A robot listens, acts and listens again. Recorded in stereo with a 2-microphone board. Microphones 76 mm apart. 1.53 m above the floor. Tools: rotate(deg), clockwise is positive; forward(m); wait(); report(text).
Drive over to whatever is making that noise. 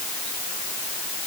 wait()
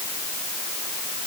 wait()
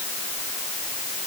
report("I can't make out anything to turn to.")